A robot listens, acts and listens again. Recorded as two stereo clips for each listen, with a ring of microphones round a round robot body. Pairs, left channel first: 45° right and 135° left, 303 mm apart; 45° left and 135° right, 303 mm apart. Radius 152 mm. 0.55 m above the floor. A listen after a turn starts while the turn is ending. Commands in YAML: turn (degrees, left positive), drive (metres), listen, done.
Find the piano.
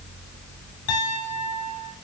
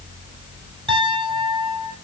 turn: -60
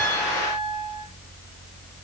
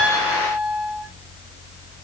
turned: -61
done: "Found it: a piano, straight ahead."